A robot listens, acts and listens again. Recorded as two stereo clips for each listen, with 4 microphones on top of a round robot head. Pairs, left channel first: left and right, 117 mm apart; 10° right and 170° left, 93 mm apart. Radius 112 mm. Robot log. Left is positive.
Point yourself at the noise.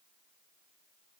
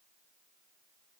cmd idle
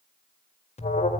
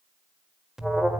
note: The alarm: 85° left.
cmd yaw +85
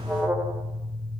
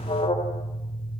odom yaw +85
note: The alarm is now 10° right.
cmd yaw -10
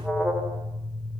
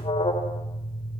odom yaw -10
end: Found it: an alarm, straight ahead.